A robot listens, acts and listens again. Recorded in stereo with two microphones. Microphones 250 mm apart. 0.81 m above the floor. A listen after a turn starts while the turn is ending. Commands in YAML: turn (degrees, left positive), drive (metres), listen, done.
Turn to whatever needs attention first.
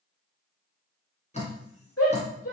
turn: 70
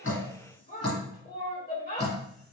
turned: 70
turn: 40
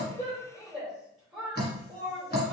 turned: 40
done: "Found it: a shout, straight ahead."